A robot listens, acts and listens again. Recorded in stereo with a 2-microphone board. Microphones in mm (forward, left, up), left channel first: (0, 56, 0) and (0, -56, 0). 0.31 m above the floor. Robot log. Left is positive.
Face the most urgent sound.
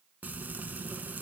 cmd idle
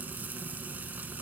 cmd idle
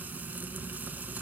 end: I can't make out anything urgent, only frying.